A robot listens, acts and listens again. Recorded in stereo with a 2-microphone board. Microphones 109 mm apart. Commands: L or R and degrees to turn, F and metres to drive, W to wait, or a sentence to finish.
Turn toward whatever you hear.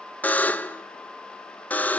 L30
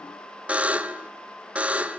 R15
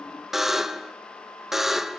Facing the buzzer, under 1 m away.